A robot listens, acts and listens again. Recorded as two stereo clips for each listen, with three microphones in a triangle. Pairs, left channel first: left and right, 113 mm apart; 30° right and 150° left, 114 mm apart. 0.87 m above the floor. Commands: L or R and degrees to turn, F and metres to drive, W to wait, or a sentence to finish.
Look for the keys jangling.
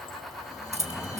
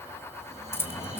R100
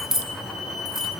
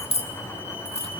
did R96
Found it: keys jangling, straight ahead.